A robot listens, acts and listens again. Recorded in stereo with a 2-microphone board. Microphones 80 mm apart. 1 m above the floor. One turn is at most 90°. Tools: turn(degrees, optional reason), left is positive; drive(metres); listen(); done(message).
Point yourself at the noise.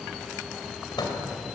turn(degrees=60, reason="The microwave: about 60° left or 120° left.")
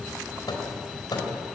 turn(degrees=60, reason="So it is at 60° left.")
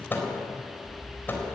turn(degrees=25, reason="The microwave is now 25° left.")
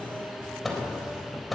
done("Found it: a microwave, straight ahead.")